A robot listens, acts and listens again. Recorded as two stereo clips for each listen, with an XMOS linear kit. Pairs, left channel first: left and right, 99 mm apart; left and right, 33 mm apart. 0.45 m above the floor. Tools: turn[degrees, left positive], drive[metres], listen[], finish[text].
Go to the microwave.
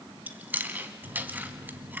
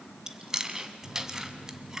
Thought: The microwave: about 55° right or 125° right.
Action: turn[-55]
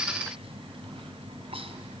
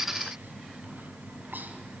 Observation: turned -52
Thought: So it is at 65° right.
Action: turn[-65]
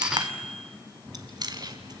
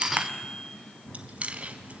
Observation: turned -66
Action: drive[1.0]
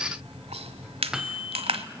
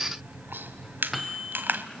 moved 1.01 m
Action: drive[1.0]
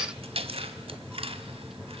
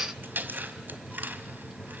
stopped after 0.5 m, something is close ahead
Action: finish[Arrived at the microwave, straight ahead.]